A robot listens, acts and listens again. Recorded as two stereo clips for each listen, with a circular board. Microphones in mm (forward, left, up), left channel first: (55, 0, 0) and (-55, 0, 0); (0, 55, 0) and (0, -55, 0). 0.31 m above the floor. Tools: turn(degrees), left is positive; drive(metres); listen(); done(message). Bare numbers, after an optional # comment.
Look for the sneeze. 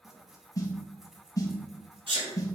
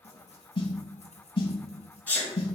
# The sneeze: 165° left.
turn(165)
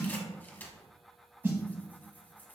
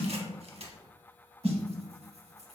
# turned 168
done("I heard a sneeze from this way, but can't make it out now.")